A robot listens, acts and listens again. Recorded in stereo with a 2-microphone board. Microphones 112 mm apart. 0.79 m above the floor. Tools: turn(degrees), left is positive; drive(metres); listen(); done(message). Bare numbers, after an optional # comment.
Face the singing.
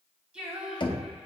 turn(-30)
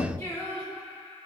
# So it is at 15° left.
turn(15)
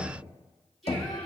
done("Found it: singing, straight ahead.")